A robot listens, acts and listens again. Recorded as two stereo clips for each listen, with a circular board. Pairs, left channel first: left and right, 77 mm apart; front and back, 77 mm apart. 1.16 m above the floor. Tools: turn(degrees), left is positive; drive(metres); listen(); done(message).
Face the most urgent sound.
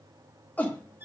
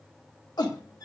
turn(degrees=25)
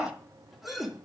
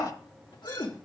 done("Facing the shout.")